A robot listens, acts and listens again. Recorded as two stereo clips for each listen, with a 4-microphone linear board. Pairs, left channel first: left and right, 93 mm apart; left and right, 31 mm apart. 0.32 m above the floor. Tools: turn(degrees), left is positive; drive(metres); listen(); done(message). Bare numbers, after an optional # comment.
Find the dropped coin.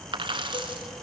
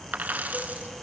# The dropped coin: about 70° right or 110° right.
turn(-70)
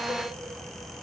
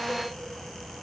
listen()
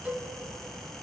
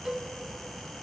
done("I heard a dropped coin, but can't make it out now. It was about straight ahead or 40° right.")